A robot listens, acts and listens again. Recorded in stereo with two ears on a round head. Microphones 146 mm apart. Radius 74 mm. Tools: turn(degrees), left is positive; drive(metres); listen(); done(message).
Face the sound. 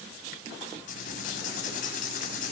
turn(degrees=50)
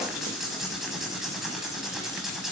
done("Facing the writing.")